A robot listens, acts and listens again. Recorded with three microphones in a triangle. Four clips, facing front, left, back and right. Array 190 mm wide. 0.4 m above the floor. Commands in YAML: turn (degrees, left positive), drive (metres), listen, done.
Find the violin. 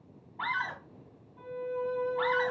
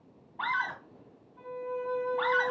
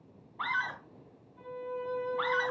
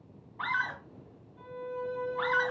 turn: 30
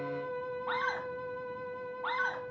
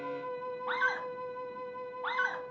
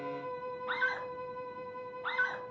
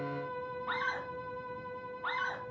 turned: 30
done: "Facing the violin."